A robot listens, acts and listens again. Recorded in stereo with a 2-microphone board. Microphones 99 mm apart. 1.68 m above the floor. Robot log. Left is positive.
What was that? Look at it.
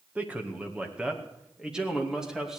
cmd yaw -30
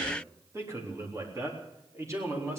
note: So it is at 150° right.
cmd yaw -150
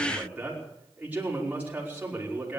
note: The man speaking is now 15° right.
cmd yaw -15
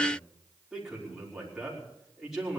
end: Found it: a man speaking, straight ahead, over 4 m away.